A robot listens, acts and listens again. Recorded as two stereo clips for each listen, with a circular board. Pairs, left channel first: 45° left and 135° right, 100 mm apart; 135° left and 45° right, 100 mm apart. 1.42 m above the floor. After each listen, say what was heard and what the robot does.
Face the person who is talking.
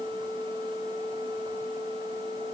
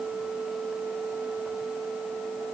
Keep listening.
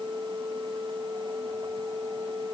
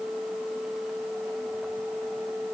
Keep listening.
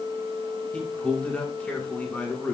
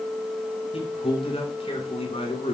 The man speaking: 120° left. Turn 120° left.
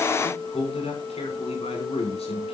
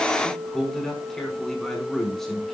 The man speaking is now 50° left. Turn 50° left.
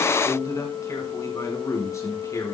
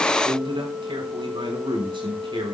The man speaking is now 15° right. Turn 15° right.
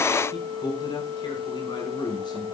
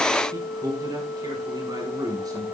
Found it: a man speaking, straight ahead.